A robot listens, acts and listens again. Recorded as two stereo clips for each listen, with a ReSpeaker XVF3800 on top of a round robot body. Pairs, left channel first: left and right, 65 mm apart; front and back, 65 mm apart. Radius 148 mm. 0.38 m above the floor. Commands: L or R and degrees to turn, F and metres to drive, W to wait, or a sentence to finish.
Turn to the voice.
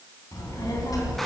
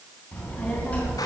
L65
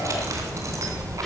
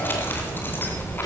L10
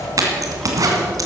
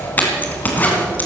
Found it: a child speaking, straight ahead.